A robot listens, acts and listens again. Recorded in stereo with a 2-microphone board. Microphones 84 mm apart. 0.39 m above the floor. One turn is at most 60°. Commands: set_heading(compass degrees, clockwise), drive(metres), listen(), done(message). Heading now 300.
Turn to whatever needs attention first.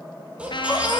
set_heading(330)
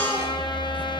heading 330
set_heading(310)
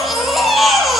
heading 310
done("Facing the baby crying.")